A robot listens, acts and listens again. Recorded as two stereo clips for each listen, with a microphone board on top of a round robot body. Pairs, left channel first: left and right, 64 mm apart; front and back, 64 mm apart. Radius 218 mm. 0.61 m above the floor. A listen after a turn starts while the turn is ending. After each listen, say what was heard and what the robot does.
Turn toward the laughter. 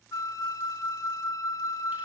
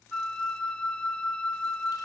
Keep listening.
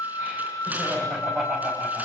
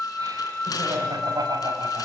The laughter: 155° right. Turn 155° right.
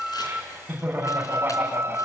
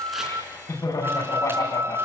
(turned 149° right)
The laughter is now 25° right. Turn 25° right.
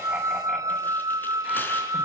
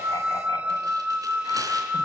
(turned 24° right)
Keep listening.
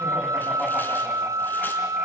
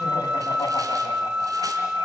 Keep listening.
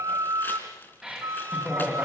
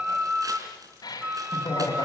Found it: laughter, straight ahead, over 4 m away.